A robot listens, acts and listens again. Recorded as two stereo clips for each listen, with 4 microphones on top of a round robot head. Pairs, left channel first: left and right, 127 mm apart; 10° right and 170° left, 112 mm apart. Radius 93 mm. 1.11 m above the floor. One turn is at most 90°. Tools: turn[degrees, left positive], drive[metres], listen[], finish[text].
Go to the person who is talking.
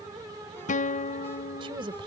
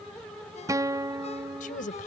Thought: The woman speaking: 30° right.
Action: turn[-30]
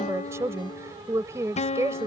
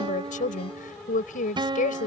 Thought: The woman speaking is now 15° right.
Action: turn[-15]
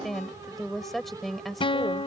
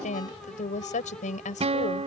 Action: drive[1.0]
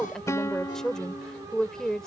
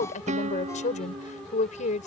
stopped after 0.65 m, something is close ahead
Action: finish[Blocked. The woman speaking is further on, straight ahead.]